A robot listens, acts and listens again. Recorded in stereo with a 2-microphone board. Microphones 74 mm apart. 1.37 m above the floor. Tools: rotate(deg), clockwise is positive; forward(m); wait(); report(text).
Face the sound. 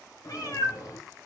rotate(-50)
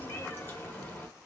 rotate(-25)
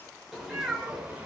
rotate(15)
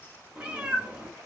rotate(25)
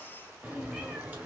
rotate(20)
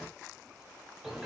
report("Facing the cat meowing, 1 to 2 m away.")